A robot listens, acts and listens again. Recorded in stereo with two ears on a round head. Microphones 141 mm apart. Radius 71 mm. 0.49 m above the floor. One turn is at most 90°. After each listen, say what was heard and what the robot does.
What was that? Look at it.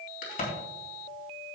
The crack: about 60° left or 120° left. Turn 60° left.
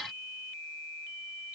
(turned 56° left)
Keep listening.
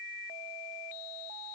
I heard a crack, but can't make it out now. It was about 5° left or 60° left.